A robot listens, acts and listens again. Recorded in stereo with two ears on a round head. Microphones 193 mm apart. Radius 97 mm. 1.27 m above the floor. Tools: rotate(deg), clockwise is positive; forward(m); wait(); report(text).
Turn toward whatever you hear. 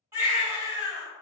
rotate(30)
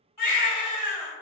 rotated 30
rotate(-15)
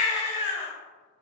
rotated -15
report("Found it: a baby crying, straight ahead.")